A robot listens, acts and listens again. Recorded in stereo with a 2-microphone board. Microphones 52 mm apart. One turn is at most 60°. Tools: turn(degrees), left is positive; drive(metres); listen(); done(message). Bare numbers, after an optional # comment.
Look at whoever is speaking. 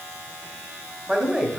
turn(-30)
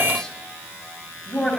# So it is at 15° left.
turn(15)
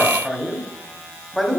done("Facing the man speaking.")